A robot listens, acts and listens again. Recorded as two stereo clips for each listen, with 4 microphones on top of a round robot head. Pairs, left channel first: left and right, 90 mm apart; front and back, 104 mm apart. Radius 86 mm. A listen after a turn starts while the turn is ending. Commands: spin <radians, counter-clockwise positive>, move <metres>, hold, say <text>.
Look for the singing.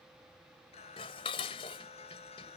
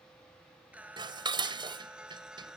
spin 1.66
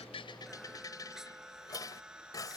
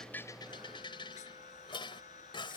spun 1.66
spin -0.17
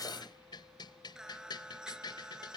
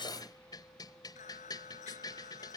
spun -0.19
spin -0.17
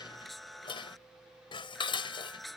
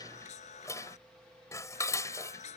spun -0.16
say Facing the singing.